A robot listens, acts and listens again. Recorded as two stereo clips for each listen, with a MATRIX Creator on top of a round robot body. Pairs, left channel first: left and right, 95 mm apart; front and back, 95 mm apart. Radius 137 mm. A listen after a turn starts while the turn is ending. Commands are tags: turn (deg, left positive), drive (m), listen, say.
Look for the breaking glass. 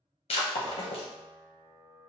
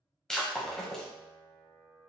<turn deg="85"/>
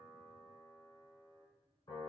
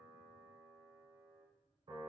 <say>Facing where the breaking glass came from. I can't hear it now.</say>